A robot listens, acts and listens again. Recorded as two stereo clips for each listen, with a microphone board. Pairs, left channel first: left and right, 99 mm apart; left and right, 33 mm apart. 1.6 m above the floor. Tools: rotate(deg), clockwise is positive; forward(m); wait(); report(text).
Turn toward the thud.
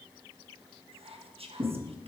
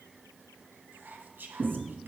rotate(50)
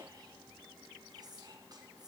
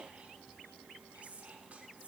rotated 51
wait()
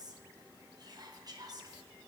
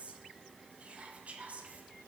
report("I heard a thud, but can't make it out now. It was about 5° left or 80° right.")